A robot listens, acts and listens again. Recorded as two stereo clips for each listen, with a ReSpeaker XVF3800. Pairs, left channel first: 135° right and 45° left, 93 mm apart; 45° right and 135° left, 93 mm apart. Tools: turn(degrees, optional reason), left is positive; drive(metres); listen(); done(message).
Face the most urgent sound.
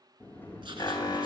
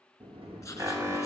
turn(degrees=-170, reason="The alarm: 170° right.")
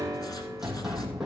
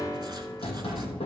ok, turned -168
done("Facing the alarm, 1 to 2 m away.")